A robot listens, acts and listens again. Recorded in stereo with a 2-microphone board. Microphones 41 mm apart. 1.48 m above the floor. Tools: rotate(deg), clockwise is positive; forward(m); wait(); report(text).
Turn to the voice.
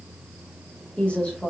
rotate(-25)
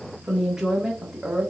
rotate(15)
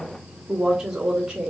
rotate(20)
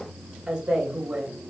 rotate(15)
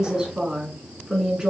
rotate(10)
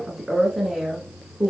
report("Found it: a woman speaking, straight ahead.")